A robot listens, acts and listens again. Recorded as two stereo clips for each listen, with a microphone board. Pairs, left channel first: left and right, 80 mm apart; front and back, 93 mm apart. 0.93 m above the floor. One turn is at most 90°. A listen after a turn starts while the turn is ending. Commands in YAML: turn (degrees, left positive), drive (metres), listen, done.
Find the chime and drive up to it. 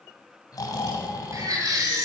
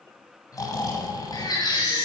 listen: true
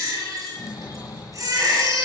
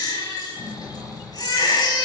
listen: true
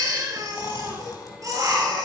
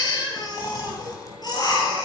done: "I can't make out a chime, only snoring and a baby crying."